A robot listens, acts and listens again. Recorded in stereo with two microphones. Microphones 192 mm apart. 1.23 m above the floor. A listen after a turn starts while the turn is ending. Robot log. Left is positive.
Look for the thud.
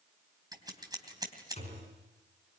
note: The thud: about 35° left or 145° left.
cmd yaw +35
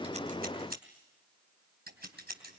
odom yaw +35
cmd idle
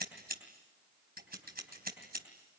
end: I heard a thud, but can't make it out now. It was about straight ahead or 110° left.